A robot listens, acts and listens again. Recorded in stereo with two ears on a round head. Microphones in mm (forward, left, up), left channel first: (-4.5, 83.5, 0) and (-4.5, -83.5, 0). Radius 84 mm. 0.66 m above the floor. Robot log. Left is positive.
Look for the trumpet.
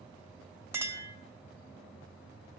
cmd idle
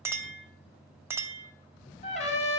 note: The trumpet: about 40° left or 140° left.
cmd yaw +40
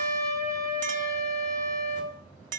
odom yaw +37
end: Facing the trumpet.